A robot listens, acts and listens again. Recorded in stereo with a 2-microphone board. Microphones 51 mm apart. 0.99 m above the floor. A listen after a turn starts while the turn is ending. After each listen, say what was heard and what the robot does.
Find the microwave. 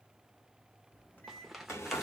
The microwave: about 40° left or 140° left. Turn 40° left.
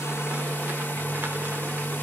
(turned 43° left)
Keep listening.
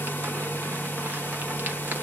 Keep listening.
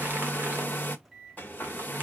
Found it: a microwave, straight ahead.